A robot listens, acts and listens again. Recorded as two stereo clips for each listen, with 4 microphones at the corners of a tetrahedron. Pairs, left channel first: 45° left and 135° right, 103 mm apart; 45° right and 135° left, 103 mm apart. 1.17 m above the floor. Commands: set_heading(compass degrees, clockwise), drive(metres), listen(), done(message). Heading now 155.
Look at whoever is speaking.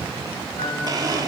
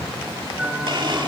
listen()
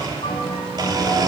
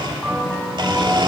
listen()
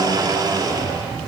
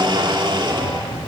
done("I can't make out anyone speaking to turn to.")